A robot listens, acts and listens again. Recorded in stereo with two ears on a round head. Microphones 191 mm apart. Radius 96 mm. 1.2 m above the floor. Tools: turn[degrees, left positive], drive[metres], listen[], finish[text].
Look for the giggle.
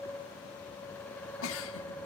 Thought: The giggle: about 70° left or 110° left.
Action: turn[70]
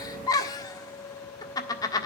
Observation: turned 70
Thought: So it is at 20° left.
Action: turn[20]
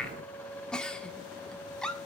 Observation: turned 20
Action: finish[Found it: a giggle, straight ahead.]